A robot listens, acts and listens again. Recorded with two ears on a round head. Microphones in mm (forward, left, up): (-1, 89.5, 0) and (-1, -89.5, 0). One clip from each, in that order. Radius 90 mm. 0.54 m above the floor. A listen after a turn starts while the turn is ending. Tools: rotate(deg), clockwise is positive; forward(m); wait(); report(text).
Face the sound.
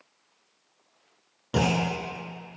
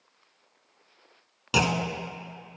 rotate(75)
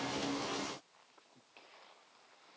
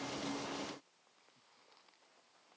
wait()
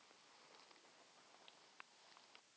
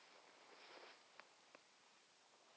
report("I heard a clunk, but can't make it out now. It was about straight ahead or 30° right.")